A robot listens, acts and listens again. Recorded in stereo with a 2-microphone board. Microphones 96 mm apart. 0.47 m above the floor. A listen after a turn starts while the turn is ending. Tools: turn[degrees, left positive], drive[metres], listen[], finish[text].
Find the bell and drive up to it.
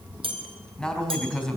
Thought: The bell: about 70° right or 110° right.
Action: turn[-70]
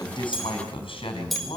Action: drive[1.0]
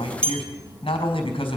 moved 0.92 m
Thought: The bell is now 10° left.
Action: turn[10]
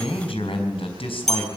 Action: drive[1.0]
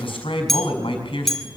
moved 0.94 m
Action: drive[1.0]
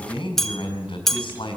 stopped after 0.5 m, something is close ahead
Action: finish[I am next to the bell.]